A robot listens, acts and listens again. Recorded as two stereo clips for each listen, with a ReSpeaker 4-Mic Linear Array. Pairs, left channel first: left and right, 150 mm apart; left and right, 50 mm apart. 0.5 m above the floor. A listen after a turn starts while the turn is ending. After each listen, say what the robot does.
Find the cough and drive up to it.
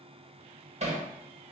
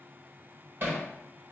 Keep listening.
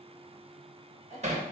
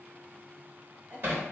Turn 40° right.
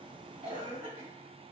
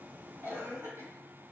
Turn 95° right.
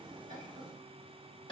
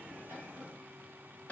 Keep listening.
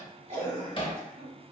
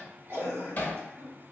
Turn 50° right.
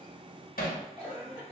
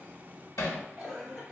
Drive 1.0 m forward.
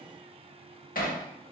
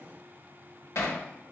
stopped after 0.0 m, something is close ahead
Keep listening.
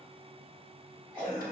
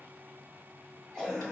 Something is in my way. I am facing the cough but have not reached it.